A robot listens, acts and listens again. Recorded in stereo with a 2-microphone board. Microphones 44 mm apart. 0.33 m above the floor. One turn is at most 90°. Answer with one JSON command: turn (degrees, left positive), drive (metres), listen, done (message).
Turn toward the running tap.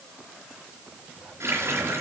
{"turn": -90}
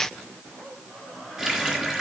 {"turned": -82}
{"turn": -15}
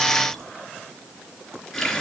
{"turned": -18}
{"done": "Facing the running tap, 2 to 4 m away."}